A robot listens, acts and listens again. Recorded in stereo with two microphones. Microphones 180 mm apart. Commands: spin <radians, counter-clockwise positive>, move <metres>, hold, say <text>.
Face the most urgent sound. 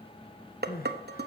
spin 1.05
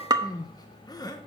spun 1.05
spin 0.44
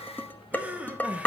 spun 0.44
spin -0.17
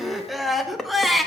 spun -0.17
say Facing the crying.